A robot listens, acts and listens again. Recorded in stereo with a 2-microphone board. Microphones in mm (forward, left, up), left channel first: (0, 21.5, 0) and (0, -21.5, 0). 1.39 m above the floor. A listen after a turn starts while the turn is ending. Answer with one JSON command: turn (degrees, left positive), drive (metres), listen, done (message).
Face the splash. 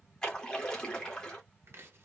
{"turn": 20}
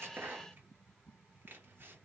{"listen": true}
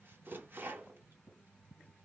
{"done": "I heard a splash, but can't make it out now. It was about straight ahead or 140° left."}